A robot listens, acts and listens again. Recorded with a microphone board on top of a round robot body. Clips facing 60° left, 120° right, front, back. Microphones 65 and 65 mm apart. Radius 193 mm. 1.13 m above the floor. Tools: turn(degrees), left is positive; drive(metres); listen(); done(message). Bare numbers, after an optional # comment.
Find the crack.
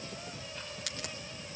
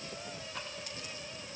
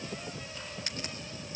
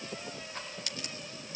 # The crack: 60° left.
turn(60)
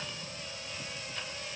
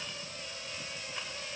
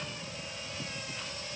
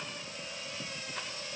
done("I heard a crack from this way, but can't make it out now.")